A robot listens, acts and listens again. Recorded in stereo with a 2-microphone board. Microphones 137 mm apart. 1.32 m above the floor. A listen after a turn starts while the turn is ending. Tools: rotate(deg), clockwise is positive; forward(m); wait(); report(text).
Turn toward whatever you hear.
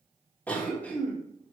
rotate(-30)
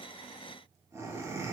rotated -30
rotate(20)
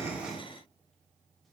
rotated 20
wait()
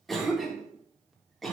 report("Found it: a cough, straight ahead, 1 to 2 m away.")